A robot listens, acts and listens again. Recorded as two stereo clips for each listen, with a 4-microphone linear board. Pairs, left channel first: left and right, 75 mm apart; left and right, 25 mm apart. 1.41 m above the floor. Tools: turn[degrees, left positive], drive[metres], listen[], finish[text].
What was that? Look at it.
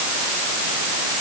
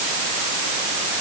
Action: listen[]
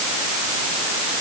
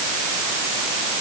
Action: listen[]
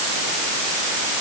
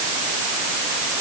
Action: finish[I can't make out anything to turn to.]